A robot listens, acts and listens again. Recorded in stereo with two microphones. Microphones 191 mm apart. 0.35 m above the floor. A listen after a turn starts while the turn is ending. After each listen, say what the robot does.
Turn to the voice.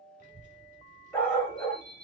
Turn 45° right.
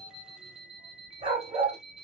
Turn 35° right.
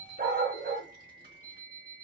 Turn 50° right.
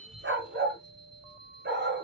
Turn 55° right.
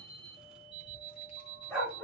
Found it: a child speaking, straight ahead, 2 to 4 m away.